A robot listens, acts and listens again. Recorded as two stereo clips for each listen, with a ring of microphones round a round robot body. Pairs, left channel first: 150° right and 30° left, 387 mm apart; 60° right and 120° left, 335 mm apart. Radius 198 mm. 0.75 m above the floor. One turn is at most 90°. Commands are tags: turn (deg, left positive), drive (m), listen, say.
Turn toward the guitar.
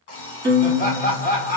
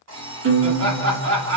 <turn deg="90"/>
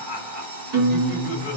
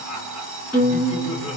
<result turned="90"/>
<turn deg="40"/>
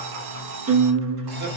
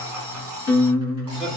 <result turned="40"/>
<say>Facing the guitar, 1 to 2 m away.</say>